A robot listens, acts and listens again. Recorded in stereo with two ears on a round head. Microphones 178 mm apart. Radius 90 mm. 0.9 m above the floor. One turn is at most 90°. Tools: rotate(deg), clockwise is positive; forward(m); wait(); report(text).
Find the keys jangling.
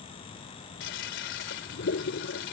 wait()
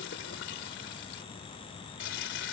wait()
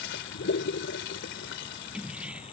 rotate(30)
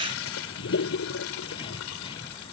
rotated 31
wait()
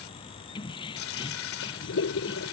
rotate(-25)
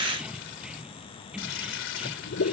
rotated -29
report("Found it: keys jangling, straight ahead.")